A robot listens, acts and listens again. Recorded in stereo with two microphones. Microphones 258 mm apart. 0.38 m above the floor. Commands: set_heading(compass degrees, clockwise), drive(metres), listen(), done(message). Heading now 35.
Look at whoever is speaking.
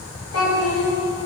set_heading(320)
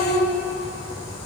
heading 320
set_heading(300)
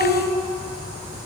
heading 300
done("Found it: a child speaking, straight ahead.")